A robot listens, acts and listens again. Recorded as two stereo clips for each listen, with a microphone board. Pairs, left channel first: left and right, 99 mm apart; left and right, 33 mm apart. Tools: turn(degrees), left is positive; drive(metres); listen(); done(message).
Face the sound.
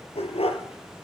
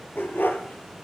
turn(degrees=90)
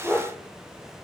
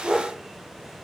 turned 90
turn(degrees=-15)
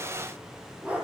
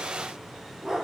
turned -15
turn(degrees=-15)
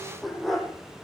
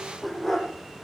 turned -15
done("Facing the dog barking, over 4 m away.")